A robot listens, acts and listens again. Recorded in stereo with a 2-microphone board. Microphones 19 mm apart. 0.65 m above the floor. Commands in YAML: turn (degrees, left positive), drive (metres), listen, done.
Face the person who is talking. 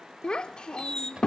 turn: 50
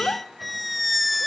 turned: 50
turn: 75
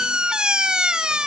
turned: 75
listen: true
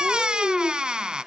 done: "Found it: a child speaking, straight ahead, 1 to 2 m away."